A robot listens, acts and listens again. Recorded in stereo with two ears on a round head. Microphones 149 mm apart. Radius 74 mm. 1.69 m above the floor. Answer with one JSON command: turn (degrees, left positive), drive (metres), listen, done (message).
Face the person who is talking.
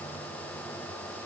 {"listen": true}
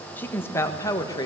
{"turn": 25}
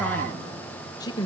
{"turn": 25}
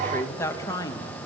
{"turn": 20}
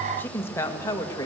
{"turn": 20}
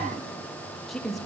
{"done": "Facing the woman speaking."}